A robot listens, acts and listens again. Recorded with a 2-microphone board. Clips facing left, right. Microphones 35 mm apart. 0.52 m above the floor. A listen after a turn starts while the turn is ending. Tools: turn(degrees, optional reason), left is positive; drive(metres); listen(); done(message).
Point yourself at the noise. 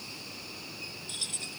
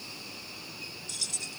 turn(degrees=30, reason="The keys jangling: about 30° left or 150° left.")
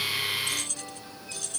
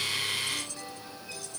turn(degrees=110, reason="So it is at 110° left.")
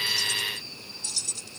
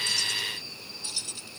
turn(degrees=-20, reason="The keys jangling is now 20° right.")
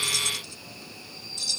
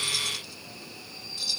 turn(degrees=-10, reason="The keys jangling is now 10° right.")
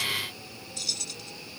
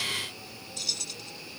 done("Found it: keys jangling, straight ahead.")